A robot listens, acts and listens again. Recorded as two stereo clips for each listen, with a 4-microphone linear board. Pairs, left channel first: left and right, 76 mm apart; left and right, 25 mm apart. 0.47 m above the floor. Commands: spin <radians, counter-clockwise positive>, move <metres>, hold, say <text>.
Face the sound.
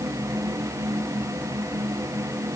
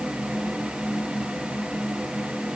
hold
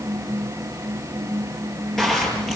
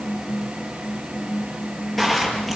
spin 0.52
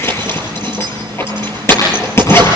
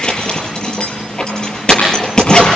spin 2.53
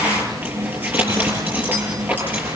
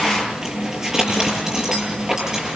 spin -0.44
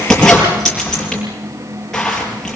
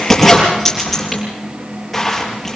say Facing the zipper, over 4 m away.